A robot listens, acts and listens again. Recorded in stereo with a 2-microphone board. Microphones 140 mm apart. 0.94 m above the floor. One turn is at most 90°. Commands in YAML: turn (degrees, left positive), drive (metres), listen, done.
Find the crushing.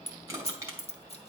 turn: -20
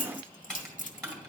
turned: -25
done: "Facing the crushing."